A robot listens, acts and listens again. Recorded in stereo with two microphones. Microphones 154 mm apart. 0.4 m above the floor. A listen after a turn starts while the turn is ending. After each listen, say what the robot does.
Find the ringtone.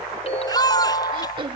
Turn 40° left.
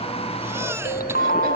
Turn 95° left.
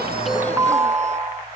Turn 20° right.
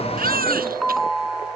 Found it: a ringtone, straight ahead.